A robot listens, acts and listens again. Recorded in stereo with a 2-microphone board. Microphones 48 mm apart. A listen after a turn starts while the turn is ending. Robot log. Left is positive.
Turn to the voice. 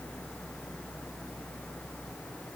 cmd idle
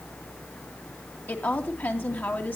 note: The woman speaking: about 45° left or 135° left.
cmd yaw +45
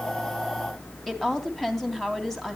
note: So it is at 10° left.
cmd yaw +10
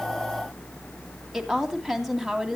end: Facing the woman speaking, 2 to 4 m away.